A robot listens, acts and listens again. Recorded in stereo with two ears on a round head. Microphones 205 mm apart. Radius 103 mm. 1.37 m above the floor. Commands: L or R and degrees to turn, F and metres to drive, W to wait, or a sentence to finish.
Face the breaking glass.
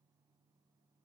W
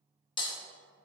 L20
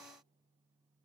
W
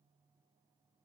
I heard breaking glass, but can't make it out now. It was about straight ahead or 140° left.